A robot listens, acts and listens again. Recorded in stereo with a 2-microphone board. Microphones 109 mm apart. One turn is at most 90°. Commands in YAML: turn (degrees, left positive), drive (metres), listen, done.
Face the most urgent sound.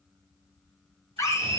turn: 25
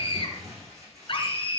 turn: 90
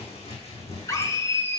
turn: 30
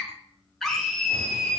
done: "Facing the scream."